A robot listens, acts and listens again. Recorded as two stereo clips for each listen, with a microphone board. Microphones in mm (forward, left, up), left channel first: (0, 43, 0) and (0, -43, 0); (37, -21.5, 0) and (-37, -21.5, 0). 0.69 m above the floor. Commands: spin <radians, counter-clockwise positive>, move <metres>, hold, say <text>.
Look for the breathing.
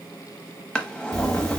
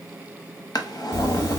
spin -0.87
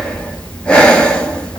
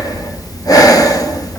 spin 0.26
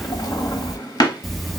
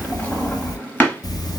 say Found it: breathing, straight ahead, under 1 m away.